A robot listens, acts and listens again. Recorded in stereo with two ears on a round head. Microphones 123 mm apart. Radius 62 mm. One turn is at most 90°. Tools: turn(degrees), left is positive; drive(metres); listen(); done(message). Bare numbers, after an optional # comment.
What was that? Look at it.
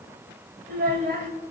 # The child speaking: about 65° right or 115° right.
turn(-65)
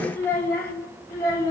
# So it is at 25° left.
turn(25)
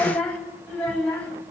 # The child speaking is now 10° left.
turn(10)
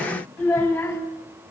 # The child speaking is now 10° left.
turn(10)
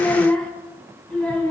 done("Found it: a child speaking, straight ahead.")